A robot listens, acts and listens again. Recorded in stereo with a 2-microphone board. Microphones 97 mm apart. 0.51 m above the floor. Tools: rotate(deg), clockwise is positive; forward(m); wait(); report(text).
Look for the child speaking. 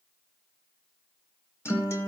wait()
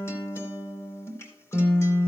wait()
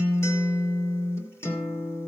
report("I can't make out a child speaking, only a guitar.")